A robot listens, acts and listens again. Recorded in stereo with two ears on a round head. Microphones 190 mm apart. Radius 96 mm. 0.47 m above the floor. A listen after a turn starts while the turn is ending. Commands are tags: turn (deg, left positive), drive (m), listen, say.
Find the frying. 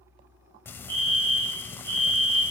<turn deg="30"/>
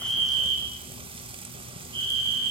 <turn deg="-25"/>
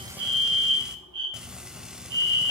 <say>Found it: frying, straight ahead, under 1 m away.</say>